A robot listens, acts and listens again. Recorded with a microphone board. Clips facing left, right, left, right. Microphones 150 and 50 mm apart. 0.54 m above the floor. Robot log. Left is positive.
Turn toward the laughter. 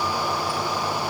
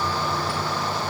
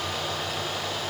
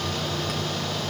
cmd idle
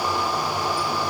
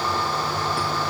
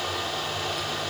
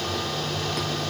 cmd idle
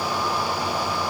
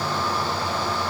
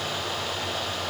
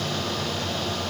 end: I can't make out laughter to turn to.